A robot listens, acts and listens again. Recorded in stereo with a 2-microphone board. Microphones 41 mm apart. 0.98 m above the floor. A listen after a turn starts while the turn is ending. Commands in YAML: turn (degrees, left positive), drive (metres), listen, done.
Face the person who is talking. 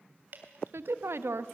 turn: -90
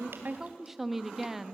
done: "Facing the woman speaking."